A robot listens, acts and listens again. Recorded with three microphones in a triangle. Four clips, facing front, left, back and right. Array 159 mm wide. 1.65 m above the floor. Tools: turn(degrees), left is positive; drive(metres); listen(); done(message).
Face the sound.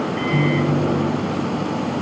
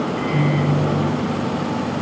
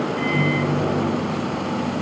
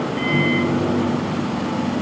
turn(degrees=-30)
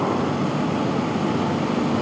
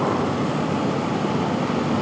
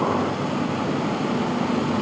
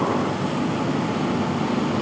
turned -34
listen()
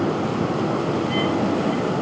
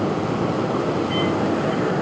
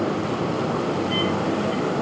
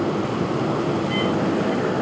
done("Found it: a microwave, straight ahead, over 4 m away.")